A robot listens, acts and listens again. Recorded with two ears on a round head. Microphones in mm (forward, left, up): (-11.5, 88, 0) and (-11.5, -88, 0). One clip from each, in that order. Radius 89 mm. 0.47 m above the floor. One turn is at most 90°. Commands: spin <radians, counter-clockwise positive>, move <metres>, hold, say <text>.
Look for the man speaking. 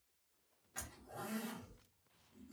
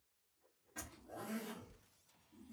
hold
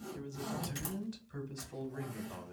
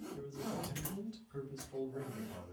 spin 0.87
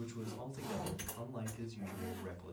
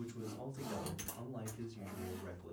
spin 0.17
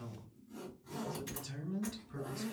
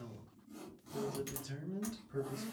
say Facing the man speaking, 1 to 2 m away.